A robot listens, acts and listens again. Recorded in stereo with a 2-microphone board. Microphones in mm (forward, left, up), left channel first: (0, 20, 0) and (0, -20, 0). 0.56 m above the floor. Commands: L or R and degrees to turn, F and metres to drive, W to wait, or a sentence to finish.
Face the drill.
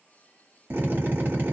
R55
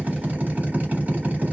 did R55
R45
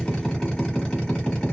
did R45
L25
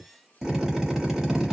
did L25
R10
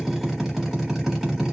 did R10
Found it: a drill, straight ahead, 1 to 2 m away.